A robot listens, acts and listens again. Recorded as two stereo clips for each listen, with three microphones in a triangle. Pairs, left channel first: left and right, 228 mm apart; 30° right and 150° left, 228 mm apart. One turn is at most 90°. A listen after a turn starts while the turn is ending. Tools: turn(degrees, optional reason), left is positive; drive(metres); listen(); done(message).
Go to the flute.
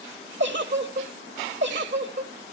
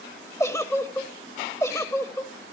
listen()
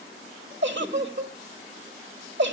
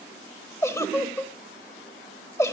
listen()
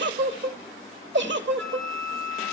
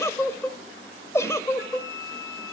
turn(degrees=-75, reason="The flute: 75° right.")
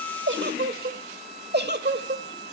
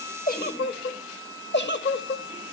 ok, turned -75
turn(degrees=-25, reason="The flute is now 25° right.")
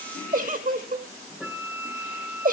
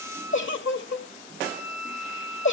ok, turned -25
turn(degrees=-10, reason="The flute is now 10° right.")
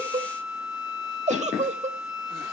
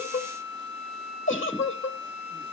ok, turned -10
drive(metres=1.0)
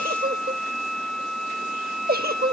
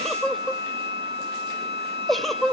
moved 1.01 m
drive(metres=1.0)
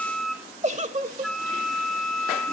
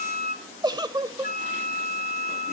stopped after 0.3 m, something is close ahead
done("Arrived at the flute, straight ahead.")